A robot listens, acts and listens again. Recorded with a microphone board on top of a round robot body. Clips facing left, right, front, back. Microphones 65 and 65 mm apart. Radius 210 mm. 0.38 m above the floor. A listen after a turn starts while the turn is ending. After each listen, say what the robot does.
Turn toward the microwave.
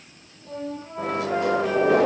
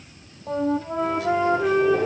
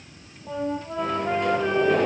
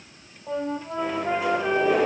Turn 95° left.
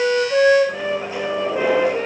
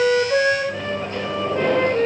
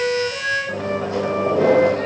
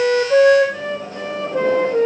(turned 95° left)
Turn 10° left.
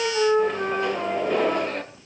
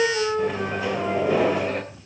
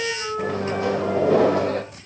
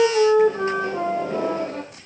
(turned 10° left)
Facing the microwave.